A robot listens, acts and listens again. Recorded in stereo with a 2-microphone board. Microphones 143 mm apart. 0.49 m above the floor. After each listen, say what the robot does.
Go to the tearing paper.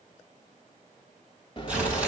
Turn 30° right.
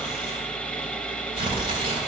Turn 140° right.
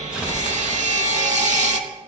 Turn 10° right.
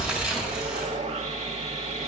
Drive 1.0 m forward.
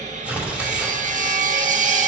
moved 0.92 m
Turn 10° right.
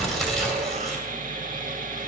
Drive 1.0 m forward.
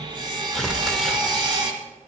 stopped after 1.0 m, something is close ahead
I am next to the tearing paper.